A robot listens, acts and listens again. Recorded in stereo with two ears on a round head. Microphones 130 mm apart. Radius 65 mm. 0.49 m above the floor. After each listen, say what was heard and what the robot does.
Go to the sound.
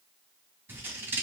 The scissors: about 15° right or 165° right. Turn 15° right.
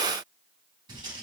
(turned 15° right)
So it is at 150° right. Turn 150° right.
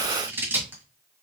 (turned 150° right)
The scissors is now 15° right. Turn 15° right.
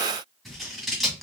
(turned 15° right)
Drive 1.0 m forward.
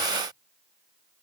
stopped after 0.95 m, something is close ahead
Keep listening.
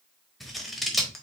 I am next to the scissors.